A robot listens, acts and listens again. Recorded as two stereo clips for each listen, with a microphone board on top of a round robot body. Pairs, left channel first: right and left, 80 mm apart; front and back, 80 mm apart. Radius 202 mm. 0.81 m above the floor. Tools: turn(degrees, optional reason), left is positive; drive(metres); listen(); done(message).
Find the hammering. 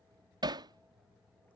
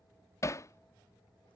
turn(degrees=55, reason="The hammering: 55° left.")
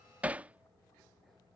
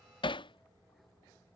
turn(degrees=15, reason="The hammering is now 15° left.")
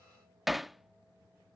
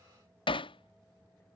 done("Facing the hammering.")